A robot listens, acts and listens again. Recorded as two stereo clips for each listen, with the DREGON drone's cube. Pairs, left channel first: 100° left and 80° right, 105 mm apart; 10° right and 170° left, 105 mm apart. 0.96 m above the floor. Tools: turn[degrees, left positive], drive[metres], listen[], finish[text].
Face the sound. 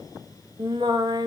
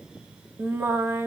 Thought: The singing: 120° right.
Action: turn[-120]
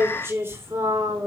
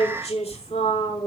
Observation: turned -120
Thought: The singing is now 15° right.
Action: turn[-15]
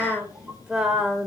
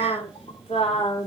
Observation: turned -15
Action: finish[Facing the singing.]